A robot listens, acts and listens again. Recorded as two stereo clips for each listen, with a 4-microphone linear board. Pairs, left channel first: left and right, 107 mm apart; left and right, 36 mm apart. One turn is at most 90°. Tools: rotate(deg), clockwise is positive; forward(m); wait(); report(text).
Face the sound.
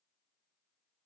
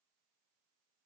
wait()
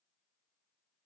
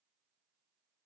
wait()
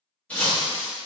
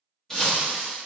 rotate(-30)
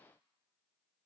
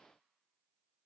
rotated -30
wait()
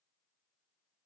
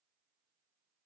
report("I heard breaking glass, but can't make it out now. It was about 20° right or 140° left.")